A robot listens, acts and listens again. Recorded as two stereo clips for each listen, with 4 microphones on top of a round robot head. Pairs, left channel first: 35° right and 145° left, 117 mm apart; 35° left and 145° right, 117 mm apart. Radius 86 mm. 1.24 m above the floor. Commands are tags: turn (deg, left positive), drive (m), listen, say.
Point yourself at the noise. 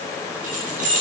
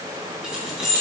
<turn deg="125"/>
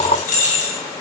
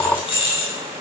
<turn deg="-15"/>
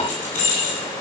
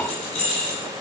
<say>Facing the keys jangling.</say>